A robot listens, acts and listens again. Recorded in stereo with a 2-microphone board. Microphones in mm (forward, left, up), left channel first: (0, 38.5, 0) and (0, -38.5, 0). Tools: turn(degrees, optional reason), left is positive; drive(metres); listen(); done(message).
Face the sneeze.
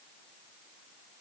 listen()
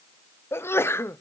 turn(degrees=30, reason="The sneeze: about 30° left or 150° left.")
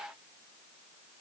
listen()
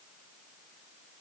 done("I heard a sneeze, but can't make it out now. It was about straight ahead or 120° left.")